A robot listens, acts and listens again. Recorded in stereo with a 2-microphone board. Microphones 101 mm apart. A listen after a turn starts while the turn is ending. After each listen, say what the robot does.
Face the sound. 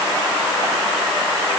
Keep listening.
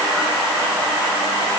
Keep listening.
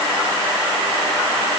I can't make out anything.